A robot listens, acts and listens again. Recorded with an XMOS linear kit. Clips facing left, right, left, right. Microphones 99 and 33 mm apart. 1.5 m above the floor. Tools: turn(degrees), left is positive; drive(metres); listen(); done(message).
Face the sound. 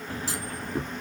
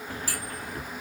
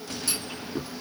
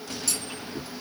turn(degrees=20)
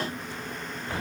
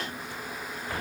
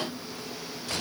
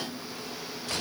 listen()
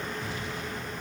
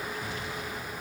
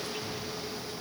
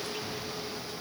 done("I heard a clunk, but can't make it out now. It was about straight ahead or 140° left.")